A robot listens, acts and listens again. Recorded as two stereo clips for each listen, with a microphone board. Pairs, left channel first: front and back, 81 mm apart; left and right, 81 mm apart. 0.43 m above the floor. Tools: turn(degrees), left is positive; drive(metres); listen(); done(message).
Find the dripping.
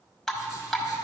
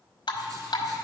turn(degrees=85)
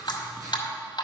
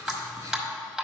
done("Facing the dripping, 1 to 2 m away.")